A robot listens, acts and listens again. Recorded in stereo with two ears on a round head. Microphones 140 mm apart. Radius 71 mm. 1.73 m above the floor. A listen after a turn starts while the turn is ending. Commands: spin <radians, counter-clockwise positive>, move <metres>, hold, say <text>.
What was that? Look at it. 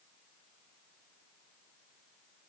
hold
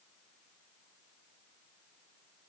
hold
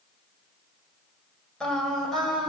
spin 0.52
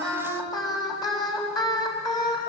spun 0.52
spin 2.71
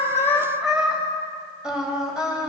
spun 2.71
say Facing the singing.